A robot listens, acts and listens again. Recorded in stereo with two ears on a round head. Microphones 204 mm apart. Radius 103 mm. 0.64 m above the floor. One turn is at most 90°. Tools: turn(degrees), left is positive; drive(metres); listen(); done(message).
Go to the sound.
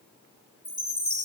turn(degrees=30)
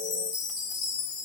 turn(degrees=90)
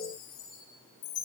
turn(degrees=75)
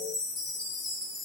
drive(metres=1.0)
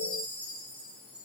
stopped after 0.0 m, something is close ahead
turn(degrees=-10)
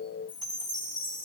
done("Something is in my way. I am facing the chime but have not reached it.")